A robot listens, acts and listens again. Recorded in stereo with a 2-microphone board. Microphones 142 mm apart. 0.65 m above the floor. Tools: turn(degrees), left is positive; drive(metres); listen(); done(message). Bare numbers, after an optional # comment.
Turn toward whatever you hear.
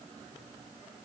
listen()
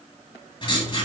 # The writing: about 35° left or 145° left.
turn(35)
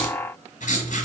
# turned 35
# So it is at 105° left.
turn(105)
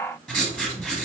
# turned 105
done("Found it: writing, straight ahead, 1 to 2 m away.")